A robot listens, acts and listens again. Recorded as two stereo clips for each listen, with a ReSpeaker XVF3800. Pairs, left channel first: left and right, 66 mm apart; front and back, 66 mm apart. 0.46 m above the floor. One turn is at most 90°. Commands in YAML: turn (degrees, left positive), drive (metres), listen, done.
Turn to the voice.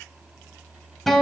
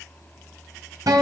listen: true
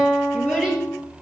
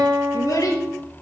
turn: -15
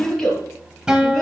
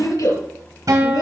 done: "Found it: a child speaking, straight ahead."